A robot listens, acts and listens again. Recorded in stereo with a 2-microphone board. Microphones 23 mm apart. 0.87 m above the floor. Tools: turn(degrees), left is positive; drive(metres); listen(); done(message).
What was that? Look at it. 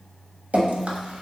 turn(degrees=-70)
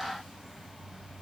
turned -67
listen()
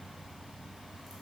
listen()
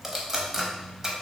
turn(degrees=-25)
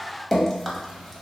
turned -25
done("Found it: dripping, straight ahead, under 1 m away.")